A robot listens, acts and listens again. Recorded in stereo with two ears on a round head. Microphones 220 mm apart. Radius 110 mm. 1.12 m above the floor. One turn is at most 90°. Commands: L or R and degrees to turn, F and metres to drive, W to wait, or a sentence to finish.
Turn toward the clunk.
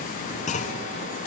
L30
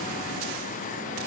W
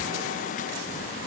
I heard a clunk, but can't make it out now. It was about straight ahead or 120° left.